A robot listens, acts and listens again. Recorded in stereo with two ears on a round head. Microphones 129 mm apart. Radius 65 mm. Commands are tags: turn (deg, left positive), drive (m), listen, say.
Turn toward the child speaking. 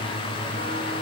<listen/>
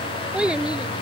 <turn deg="-30"/>
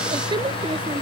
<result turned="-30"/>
<turn deg="-145"/>
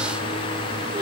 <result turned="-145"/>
<listen/>
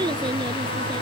<turn deg="-30"/>
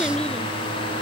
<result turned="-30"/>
<listen/>
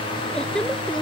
<say>Found it: a child speaking, straight ahead.</say>